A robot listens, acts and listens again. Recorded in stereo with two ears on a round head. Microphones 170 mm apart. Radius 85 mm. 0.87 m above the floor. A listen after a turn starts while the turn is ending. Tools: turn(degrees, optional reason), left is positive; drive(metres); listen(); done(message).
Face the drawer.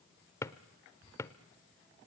turn(degrees=15, reason="The drawer: about 15° left or 165° left.")
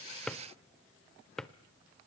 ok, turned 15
done("Facing the drawer, under 1 m away.")